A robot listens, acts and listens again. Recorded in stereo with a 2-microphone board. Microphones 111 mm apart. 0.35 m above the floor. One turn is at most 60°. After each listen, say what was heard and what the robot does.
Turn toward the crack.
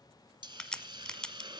Turn 30° left.
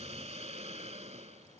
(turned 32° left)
Keep listening.
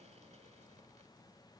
I heard a crack, but can't make it out now. It was about 25° right or 140° left.